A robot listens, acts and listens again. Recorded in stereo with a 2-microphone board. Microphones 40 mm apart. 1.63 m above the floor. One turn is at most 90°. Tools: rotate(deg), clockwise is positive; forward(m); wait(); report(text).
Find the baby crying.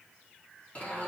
wait()
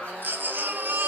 rotate(50)
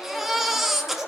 report("Facing the baby crying.")